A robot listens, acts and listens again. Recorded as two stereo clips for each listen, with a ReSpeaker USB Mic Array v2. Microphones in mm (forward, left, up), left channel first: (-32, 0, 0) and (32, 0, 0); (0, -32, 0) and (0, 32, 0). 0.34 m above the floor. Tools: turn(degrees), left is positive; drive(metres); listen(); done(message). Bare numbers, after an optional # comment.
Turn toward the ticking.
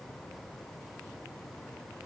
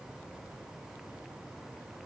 listen()
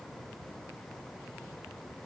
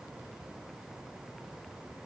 listen()
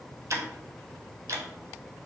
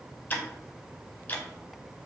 # The ticking: 30° right.
turn(-30)
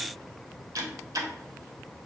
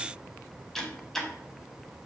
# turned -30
done("Found it: ticking, straight ahead, under 1 m away.")